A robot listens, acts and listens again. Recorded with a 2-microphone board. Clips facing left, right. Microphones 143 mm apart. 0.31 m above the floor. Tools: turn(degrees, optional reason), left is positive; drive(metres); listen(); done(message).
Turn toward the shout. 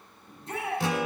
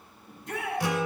turn(degrees=30, reason="The shout: about 30° left or 150° left.")
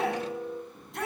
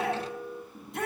done("Facing the shout, over 4 m away.")